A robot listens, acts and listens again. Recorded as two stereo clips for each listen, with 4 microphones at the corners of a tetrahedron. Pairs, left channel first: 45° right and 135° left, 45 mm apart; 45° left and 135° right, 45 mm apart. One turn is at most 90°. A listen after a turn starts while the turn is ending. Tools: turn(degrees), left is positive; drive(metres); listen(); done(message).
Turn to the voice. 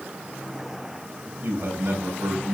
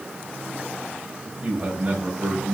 turn(degrees=90)
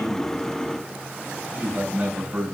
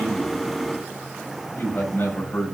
turn(degrees=85)
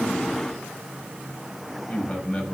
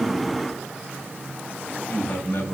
turn(degrees=20)
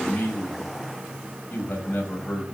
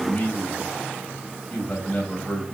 done("Found it: a man speaking, straight ahead.")